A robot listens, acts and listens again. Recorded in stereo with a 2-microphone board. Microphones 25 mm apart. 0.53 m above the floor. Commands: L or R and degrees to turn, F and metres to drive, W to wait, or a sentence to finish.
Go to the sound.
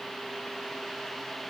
W
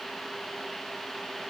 W
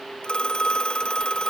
L40
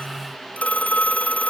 L100
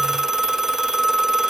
R25
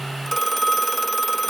F1.0
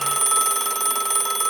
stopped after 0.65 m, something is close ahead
Something is in my way. I am facing the phone ringing but have not reached it.